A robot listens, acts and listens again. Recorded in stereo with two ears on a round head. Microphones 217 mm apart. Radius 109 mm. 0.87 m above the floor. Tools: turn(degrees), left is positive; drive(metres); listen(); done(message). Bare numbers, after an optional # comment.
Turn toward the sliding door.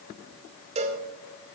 listen()
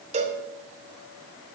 listen()
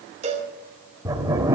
turn(-30)
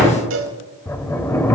# So it is at 15° left.
turn(15)
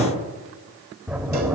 done("Facing the sliding door.")